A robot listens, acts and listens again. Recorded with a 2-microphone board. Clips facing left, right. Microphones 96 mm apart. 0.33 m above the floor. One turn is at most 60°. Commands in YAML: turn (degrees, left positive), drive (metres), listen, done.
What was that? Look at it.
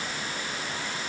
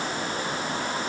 listen: true
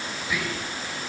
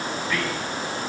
turn: 30
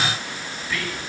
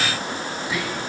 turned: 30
turn: -20
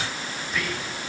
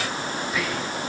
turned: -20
done: "Facing the whispering, 2 to 4 m away."